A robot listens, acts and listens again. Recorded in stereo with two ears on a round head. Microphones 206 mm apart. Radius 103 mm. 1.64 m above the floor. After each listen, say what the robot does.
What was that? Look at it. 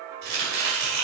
Turn 50° right.
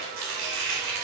Turn 85° right.
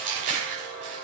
Turn 35° right.
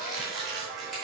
Found it: chopping, straight ahead.